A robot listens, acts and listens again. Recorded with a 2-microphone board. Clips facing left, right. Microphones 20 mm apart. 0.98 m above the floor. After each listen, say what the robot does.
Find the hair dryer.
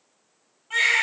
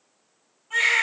Keep listening.
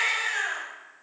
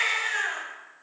Keep listening.
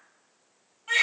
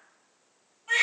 I can't make out a hair dryer to turn to.